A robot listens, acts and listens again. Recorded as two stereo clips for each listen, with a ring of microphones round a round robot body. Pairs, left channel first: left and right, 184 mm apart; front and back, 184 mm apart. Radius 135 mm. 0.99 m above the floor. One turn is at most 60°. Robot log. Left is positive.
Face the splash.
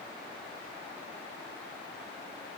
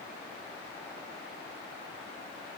cmd idle
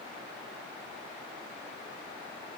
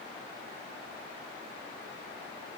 cmd idle
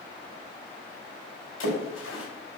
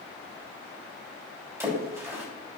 note: The splash: 105° left.
cmd yaw +60
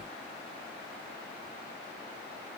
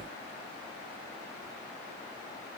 note: Nothing new. It was at 45° left.
cmd yaw +45
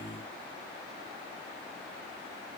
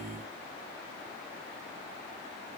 end: I heard a splash from this way, but can't make it out now.